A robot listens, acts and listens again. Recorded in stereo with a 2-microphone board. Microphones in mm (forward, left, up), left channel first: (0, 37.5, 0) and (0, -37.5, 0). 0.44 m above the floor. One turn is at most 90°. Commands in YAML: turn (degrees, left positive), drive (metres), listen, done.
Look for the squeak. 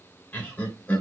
listen: true
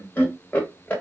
listen: true
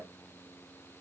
done: "I can't make out a squeak to turn to."